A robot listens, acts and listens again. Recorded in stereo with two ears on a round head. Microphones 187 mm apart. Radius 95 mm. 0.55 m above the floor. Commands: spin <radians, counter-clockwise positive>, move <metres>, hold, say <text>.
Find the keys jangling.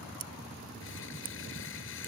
hold
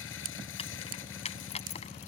spin 0.52
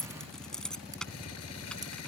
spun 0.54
say Found it: keys jangling, straight ahead.